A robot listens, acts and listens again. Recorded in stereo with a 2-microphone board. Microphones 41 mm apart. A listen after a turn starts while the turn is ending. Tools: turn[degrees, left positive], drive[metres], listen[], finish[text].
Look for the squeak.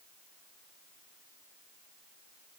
Action: listen[]
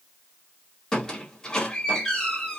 Thought: The squeak: about 15° left or 165° left.
Action: turn[15]
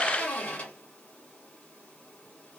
Thought: So it is at 150° left.
Action: turn[150]
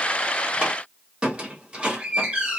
Thought: The squeak is now 25° right.
Action: turn[-25]
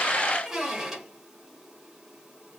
Thought: The squeak is now 10° right.
Action: turn[-10]
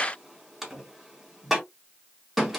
Action: finish[Found it: a squeak, straight ahead, 1 to 2 m away.]